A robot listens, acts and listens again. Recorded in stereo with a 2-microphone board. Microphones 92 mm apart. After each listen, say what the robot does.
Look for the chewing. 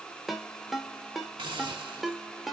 Keep listening.
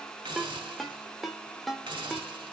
Keep listening.
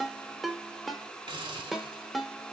I can't make out chewing, only a ringtone and a hiss.